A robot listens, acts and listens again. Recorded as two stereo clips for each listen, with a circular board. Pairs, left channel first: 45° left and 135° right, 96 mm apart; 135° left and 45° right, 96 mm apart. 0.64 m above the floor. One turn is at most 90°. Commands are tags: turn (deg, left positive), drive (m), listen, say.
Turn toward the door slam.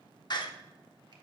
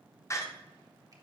<turn deg="80"/>
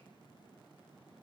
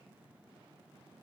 <say>I heard a door slam from this way, but can't make it out now.</say>